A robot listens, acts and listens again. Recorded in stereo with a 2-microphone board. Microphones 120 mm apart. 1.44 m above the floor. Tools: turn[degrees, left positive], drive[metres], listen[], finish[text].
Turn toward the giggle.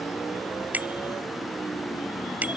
Action: listen[]
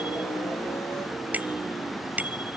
Action: listen[]
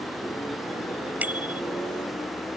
Action: finish[I can't make out a giggle, only a bicycle bell.]